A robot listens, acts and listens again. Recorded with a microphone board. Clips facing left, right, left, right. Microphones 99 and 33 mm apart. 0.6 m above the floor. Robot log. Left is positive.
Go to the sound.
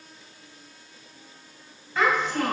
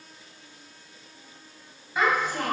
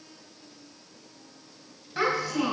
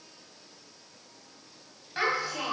cmd yaw -30
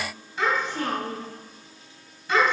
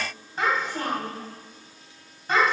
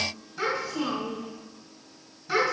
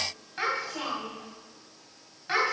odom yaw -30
note: So it is at 135° right.
cmd yaw -135
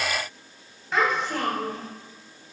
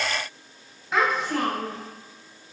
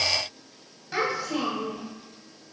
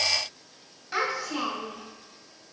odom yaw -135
cmd fwd 1.0
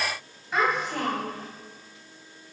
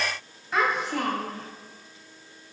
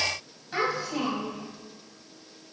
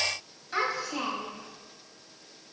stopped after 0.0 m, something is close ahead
end: Something is in my way. I am facing the child speaking but have not reached it.